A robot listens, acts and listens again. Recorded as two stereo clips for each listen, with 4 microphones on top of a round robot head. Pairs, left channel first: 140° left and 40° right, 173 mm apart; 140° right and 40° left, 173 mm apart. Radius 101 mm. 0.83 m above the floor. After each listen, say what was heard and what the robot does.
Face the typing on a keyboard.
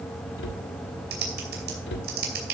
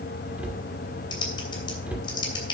The typing on a keyboard: 75° right. Turn 75° right.
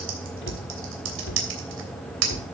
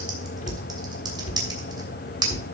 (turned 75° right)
The typing on a keyboard is now 30° right. Turn 30° right.
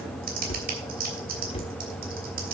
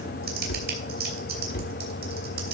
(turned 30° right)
Facing the typing on a keyboard.